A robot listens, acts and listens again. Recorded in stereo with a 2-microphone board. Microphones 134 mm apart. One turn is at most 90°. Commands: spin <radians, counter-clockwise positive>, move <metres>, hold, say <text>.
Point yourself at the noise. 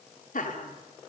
spin 1.57
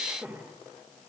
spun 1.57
spin -0.26
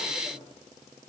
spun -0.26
hold
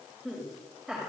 say Facing the laughter.